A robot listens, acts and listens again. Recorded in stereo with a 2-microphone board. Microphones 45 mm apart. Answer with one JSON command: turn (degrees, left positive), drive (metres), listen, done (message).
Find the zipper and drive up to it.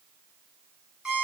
{"listen": true}
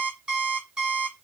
{"listen": true}
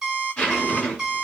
{"turn": 20}
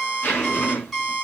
{"turn": 135}
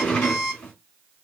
{"turn": 35}
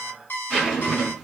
{"drive": 1.0}
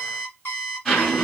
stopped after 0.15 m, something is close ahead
{"turn": 15}
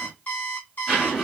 {"done": "Blocked. The zipper is further on, straight ahead."}